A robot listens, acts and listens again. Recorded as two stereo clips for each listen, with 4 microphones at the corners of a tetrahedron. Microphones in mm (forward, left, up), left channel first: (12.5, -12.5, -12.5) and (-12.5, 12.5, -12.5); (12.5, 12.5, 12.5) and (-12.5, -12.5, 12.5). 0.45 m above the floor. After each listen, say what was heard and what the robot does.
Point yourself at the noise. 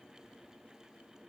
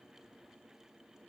Keep listening.
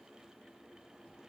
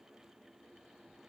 Keep listening.
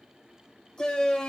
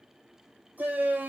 The shout: 125° right. Turn 125° right.
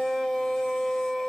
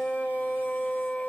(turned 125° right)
The shout is now 15° left. Turn 15° left.
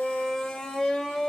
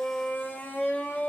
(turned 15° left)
The shout is now 10° left. Turn 10° left.
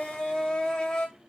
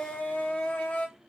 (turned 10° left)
Facing the shout.